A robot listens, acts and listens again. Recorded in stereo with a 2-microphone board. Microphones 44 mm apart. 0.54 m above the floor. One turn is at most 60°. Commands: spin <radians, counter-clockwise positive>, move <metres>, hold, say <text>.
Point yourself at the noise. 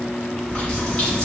spin 0.52
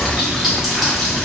say Facing the running tap, 1 to 2 m away.